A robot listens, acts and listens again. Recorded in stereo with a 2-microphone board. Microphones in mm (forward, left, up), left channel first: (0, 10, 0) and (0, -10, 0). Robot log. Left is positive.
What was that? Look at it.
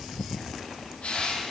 cmd yaw +90
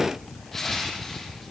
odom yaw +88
note: So it is at 10° left.
cmd yaw +10
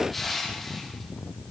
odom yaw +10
end: Facing the crushing.